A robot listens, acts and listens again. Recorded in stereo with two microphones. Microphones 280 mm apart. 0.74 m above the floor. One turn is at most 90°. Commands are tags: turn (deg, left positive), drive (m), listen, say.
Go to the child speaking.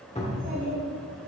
<turn deg="-45"/>
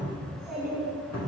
<drive m="1.0"/>
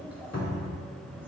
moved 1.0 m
<drive m="1.0"/>
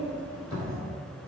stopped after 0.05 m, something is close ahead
<turn deg="-15"/>
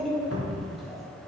<say>Arrived at the child speaking, straight ahead.</say>